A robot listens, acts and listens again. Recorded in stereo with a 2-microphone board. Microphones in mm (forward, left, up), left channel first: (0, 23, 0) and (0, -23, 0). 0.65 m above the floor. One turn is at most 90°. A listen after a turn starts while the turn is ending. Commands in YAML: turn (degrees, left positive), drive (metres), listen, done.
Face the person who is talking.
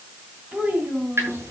turn: -30
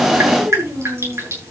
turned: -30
turn: -90
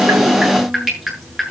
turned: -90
turn: -35
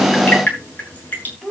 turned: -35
done: "Found it: a child speaking, straight ahead."